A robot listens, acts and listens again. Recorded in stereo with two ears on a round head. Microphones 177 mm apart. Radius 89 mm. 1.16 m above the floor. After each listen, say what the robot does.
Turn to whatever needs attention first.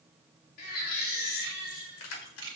Turn 45° left.
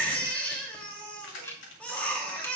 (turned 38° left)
Facing the baby crying.